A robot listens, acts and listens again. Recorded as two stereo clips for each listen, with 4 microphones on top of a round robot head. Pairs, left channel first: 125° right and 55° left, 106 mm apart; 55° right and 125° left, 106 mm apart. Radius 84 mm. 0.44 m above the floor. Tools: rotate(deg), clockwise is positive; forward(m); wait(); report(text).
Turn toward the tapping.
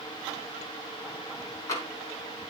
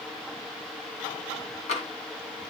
rotate(65)
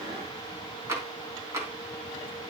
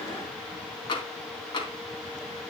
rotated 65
rotate(10)
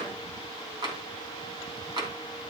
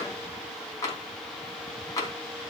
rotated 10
report("Found it: tapping, straight ahead.")